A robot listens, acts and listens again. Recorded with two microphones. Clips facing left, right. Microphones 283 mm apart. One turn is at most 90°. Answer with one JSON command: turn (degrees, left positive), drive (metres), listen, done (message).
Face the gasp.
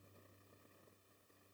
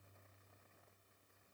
{"listen": true}
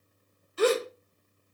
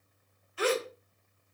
{"turn": 45}
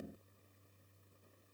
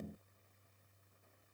{"listen": true}
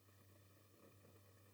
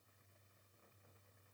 {"done": "I heard a gasp, but can't make it out now. It was about straight ahead or 90° left."}